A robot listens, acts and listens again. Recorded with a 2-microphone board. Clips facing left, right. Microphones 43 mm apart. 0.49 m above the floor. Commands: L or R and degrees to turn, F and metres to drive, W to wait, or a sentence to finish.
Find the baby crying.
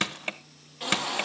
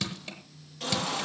L15
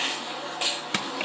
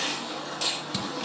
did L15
L150
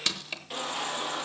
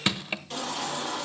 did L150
L10
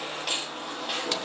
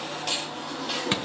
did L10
Facing the baby crying.